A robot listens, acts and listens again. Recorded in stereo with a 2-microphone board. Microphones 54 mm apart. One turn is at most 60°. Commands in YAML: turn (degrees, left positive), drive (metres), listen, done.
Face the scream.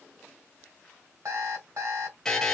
listen: true
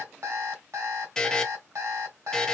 listen: true
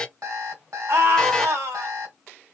turn: -60
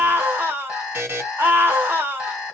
turn: -45
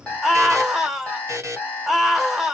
done: "Found it: a scream, straight ahead."